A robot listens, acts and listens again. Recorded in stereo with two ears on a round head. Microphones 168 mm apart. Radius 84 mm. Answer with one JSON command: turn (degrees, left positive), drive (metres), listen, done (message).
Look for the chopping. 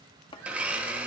{"turn": 25}
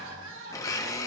{"listen": true}
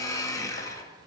{"listen": true}
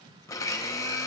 {"done": "I heard chopping, but can't make it out now. It was about straight ahead or 130° left."}